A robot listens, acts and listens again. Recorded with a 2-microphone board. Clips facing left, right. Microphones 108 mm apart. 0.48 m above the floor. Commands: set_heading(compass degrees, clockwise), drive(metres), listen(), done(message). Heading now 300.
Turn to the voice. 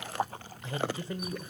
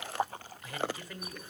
set_heading(275)
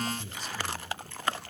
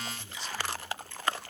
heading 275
set_heading(150)
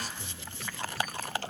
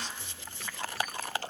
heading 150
listen()
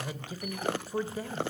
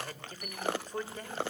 set_heading(140)
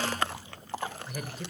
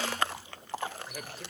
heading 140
done("Facing the man speaking, 1 to 2 m away.")